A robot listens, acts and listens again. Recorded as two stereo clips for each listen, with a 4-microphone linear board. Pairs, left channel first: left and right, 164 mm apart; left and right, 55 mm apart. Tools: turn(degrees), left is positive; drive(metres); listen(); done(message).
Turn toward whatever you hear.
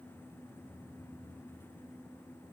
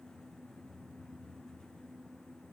listen()
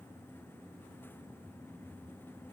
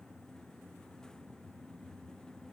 listen()
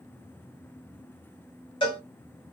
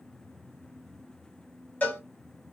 turn(degrees=30)
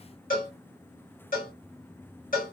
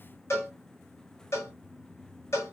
turn(degrees=115)
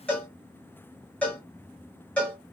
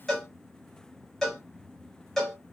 turn(degrees=10)
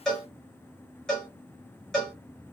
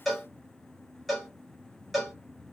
done("Found it: a cowbell, straight ahead.")